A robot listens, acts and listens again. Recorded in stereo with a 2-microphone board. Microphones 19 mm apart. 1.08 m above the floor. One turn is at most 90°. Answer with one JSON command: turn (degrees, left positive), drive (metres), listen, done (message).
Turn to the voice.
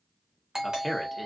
{"turn": 30}
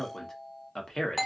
{"turn": 90}
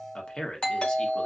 {"turn": 55}
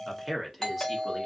{"done": "Found it: a man speaking, straight ahead."}